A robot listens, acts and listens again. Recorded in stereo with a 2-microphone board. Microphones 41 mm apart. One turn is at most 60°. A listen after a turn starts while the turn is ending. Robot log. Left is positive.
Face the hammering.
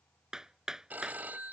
note: The hammering: about 15° right or 165° right.
cmd yaw -15
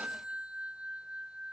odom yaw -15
cmd idle
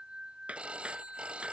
note: So it is at 150° right.
cmd yaw -60
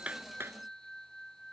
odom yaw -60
note: Nothing new. It was at 90° right.
cmd yaw -60
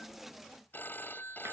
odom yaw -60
note: Nothing new. It was at 30° right.
cmd yaw -30
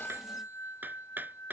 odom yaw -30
note: The hammering is now 45° right.
cmd yaw -45
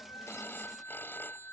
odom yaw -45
cmd idle
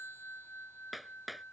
end: Facing the hammering.